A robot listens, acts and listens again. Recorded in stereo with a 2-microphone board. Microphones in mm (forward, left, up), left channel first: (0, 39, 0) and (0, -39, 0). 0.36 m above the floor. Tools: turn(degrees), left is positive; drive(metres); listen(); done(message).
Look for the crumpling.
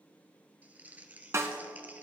turn(degrees=-20)
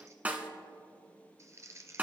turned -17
turn(degrees=-140)
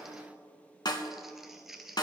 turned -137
done("Found it: crumpling, straight ahead.")